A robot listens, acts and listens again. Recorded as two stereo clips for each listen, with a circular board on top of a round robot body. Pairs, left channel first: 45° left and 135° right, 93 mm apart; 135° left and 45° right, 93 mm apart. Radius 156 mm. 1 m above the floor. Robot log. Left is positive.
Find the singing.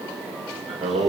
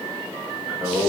note: The singing: 125° right.
cmd yaw -125
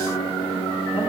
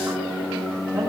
note: The singing is now 15° left.
cmd yaw +15
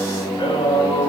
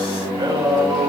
end: Facing the singing.